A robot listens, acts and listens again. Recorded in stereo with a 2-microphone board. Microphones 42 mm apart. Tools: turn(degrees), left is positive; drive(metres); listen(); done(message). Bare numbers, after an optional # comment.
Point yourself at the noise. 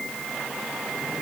listen()
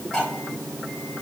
# The cutlery clinking: about 15° left or 165° left.
turn(15)
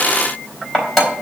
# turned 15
done("Facing the cutlery clinking, 2 to 4 m away.")